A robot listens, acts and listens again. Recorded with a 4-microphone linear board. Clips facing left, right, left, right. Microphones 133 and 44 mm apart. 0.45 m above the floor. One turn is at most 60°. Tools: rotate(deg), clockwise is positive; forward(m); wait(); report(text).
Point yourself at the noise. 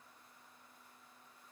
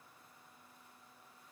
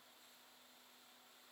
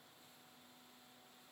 wait()
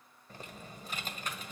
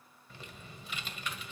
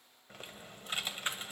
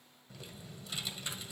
rotate(-40)
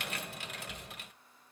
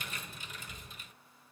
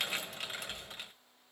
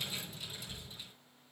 rotate(-60)
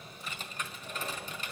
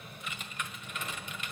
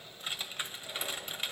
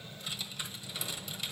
rotate(-40)
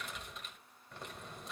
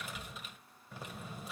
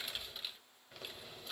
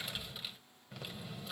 report("Facing the typing on a keyboard, 1 to 2 m away.")